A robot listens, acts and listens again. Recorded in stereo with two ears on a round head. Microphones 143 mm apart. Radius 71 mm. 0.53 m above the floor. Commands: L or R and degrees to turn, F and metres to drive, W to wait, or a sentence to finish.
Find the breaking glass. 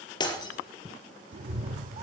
L30
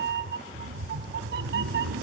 W
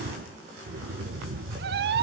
I heard breaking glass, but can't make it out now. It was about straight ahead or 120° left.